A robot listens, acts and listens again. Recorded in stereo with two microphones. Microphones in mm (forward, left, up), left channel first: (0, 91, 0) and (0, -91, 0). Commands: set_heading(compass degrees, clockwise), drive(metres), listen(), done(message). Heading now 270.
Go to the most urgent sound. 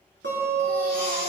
set_heading(205)
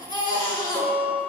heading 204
set_heading(154)
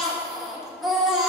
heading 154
drive(1.0)
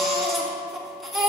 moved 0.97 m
drive(1.0)
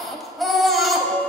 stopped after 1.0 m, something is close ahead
done("I am next to the baby crying.")